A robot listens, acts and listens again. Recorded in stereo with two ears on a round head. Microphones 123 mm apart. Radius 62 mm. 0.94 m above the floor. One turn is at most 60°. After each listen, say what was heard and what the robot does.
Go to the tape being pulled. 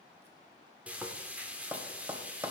Keep listening.
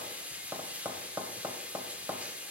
Keep listening.
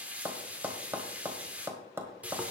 I can't make out tape being pulled to turn to.